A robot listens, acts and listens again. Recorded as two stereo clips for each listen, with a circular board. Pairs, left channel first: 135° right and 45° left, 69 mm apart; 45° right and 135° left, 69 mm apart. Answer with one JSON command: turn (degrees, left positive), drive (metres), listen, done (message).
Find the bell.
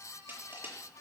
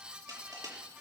{"listen": true}
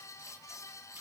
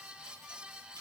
{"listen": true}
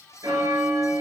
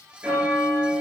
{"turn": 65}
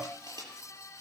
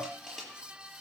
{"listen": true}
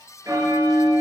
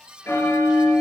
{"turn": 10}
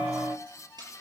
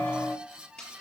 {"done": "Found it: a bell, straight ahead."}